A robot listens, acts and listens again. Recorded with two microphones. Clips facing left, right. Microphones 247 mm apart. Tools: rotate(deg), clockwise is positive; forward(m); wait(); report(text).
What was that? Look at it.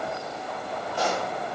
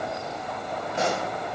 rotate(25)
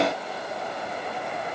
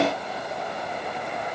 wait()
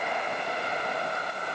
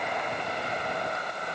report("I heard a pop, but can't make it out now. It was about straight ahead or 130° right.")